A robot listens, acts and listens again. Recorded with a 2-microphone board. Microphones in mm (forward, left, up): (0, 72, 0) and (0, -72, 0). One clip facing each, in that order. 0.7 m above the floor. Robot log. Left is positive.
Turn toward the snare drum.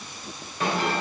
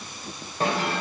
note: The snare drum: about 30° right or 150° right.
cmd yaw -30
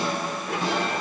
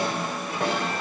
note: So it is at 120° right.
cmd yaw -120
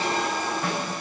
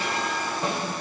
note: The snare drum is now 35° right.
cmd yaw -35
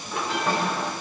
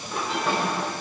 note: The snare drum is now 10° right.
cmd yaw -10
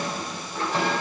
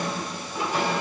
cmd idle
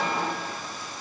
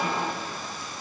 cmd idle
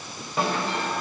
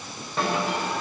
end: Found it: a snare drum, straight ahead.